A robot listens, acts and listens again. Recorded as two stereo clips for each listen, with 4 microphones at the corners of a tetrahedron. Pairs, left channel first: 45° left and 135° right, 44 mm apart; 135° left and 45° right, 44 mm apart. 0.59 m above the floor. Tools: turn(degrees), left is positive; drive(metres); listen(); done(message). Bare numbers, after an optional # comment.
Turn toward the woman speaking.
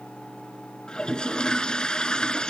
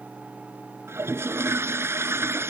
listen()
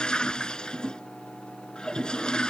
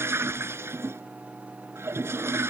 listen()
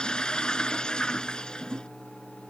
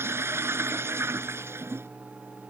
done("I can't make out a woman speaking to turn to.")